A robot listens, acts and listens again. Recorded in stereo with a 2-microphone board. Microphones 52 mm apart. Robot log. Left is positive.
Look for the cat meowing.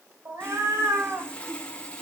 note: The cat meowing: about 65° right or 115° right.
cmd yaw -65
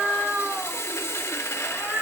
note: So it is at 20° right.
cmd yaw -20
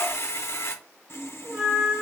end: Found it: a cat meowing, straight ahead, 2 to 4 m away.